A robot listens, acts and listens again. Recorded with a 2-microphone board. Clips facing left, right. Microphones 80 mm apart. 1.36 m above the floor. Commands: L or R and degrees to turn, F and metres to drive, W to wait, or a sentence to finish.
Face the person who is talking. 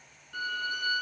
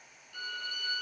W
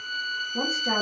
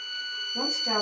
L25
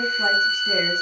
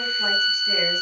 W
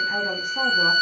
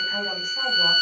W
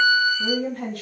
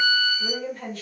L130
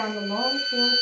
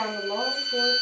Found it: a woman speaking, straight ahead, 1 to 2 m away.